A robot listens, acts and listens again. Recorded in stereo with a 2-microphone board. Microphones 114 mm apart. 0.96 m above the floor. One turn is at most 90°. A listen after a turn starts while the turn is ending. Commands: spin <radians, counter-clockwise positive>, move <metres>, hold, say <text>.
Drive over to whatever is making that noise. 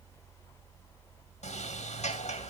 spin 1.57
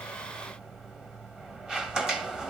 move 1.0
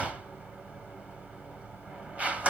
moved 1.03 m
spin -0.26
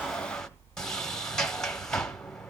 move 1.0
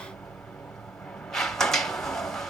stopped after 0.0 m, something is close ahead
say I am next to the sliding door.